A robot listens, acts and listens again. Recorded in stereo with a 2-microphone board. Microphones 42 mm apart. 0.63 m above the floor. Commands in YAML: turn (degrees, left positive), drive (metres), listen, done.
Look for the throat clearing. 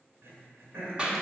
turn: -75
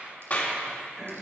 turn: -10
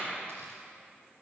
listen: true
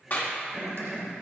done: "Found it: throat clearing, straight ahead."